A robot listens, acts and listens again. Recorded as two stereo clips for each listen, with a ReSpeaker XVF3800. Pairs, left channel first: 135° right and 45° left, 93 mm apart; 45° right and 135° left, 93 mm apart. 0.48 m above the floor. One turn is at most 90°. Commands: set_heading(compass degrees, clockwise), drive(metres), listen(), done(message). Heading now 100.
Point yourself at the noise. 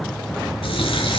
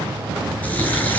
set_heading(190)
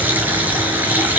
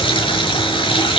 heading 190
set_heading(215)
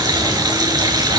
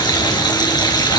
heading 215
done("Facing the running tap, over 4 m away.")